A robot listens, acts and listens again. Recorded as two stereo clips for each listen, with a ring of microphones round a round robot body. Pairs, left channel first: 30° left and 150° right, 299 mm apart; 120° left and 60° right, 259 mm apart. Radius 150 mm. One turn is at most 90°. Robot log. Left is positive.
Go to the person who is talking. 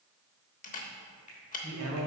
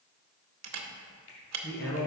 note: The man speaking: 175° left.
cmd yaw +90
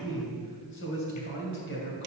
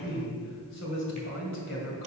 note: The man speaking is now 80° left.
cmd yaw +80
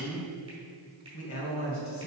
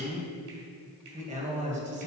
cmd fwd 1.0
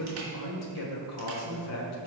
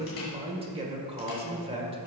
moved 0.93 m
cmd fwd 1.0
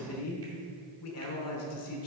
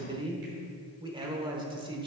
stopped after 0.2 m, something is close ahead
note: The man speaking is now 10° left.
cmd yaw +10
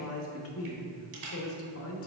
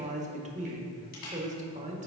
end: Arrived at the man speaking, straight ahead.